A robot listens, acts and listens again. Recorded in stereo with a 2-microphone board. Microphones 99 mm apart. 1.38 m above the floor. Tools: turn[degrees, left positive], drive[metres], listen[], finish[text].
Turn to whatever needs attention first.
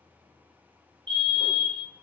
Thought: The fire alarm: about 55° right or 125° right.
Action: turn[-55]
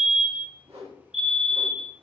Action: finish[Facing the fire alarm, 1 to 2 m away.]